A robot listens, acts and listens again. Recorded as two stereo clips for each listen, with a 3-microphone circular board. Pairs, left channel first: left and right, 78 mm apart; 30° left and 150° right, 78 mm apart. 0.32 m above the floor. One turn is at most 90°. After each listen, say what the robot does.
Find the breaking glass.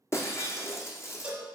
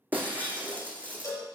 Turn 90° left.
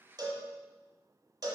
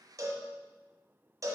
Turn 55° left.
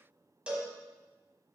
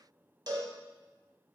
Facing where the breaking glass came from. I can't hear it now.